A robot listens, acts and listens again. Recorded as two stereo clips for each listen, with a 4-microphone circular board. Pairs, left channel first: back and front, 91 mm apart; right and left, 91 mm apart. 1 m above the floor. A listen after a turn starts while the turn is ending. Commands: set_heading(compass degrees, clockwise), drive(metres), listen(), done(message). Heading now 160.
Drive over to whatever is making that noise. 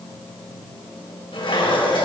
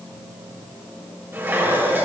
set_heading(5)
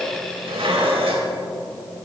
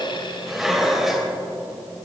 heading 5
drive(1.0)
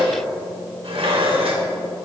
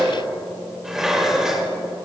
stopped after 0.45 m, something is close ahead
done("Something is in my way. I am facing the dishes clattering but have not reached it.")